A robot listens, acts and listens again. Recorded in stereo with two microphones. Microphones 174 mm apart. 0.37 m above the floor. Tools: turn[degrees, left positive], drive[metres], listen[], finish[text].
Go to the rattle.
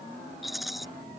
Action: turn[30]
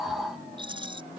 Thought: So it is at 30° right.
Action: turn[-30]
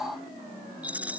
Thought: The rattle is now 10° right.
Action: turn[-10]
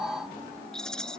Action: drive[1.0]
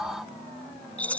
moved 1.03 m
Thought: The rattle is now 10° left.
Action: turn[10]
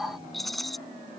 Action: drive[1.0]
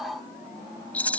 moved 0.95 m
Thought: The rattle is now 10° left.
Action: turn[10]
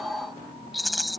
Action: drive[1.0]
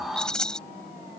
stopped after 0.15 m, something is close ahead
Action: finish[Arrived at the rattle, straight ahead.]